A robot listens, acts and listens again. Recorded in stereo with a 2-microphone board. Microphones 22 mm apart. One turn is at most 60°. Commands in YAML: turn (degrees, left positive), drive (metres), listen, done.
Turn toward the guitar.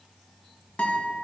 turn: 60
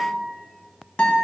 turn: 55
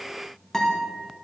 turn: 15
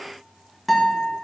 done: "Found it: a guitar, straight ahead, 2 to 4 m away."